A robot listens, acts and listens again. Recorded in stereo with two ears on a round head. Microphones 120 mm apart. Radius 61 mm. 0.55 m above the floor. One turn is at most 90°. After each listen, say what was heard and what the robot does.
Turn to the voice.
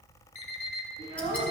Turn 90° right.
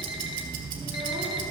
Keep listening.
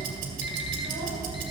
Keep listening.
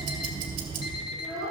Found it: a child speaking, straight ahead, over 4 m away.